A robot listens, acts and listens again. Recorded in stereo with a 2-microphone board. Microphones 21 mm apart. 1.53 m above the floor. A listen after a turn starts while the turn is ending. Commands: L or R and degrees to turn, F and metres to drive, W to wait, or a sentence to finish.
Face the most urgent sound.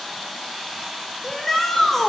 L15
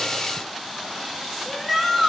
Facing the shout.